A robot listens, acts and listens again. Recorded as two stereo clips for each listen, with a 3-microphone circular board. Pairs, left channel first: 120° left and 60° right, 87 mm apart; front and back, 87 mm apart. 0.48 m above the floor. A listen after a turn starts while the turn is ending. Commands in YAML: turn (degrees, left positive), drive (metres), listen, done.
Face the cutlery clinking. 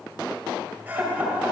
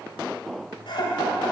listen: true
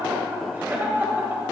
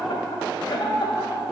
listen: true
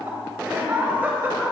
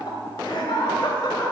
done: "I can't make out cutlery clinking, only laughter."